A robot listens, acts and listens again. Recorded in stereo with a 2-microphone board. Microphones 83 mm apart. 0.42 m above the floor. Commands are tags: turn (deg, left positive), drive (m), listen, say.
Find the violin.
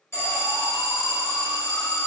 <listen/>
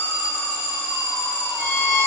<turn deg="-55"/>
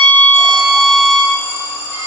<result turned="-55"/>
<turn deg="-70"/>
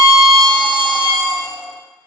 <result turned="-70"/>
<turn deg="25"/>
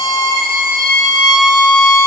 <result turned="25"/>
<say>Found it: a violin, straight ahead, 1 to 2 m away.</say>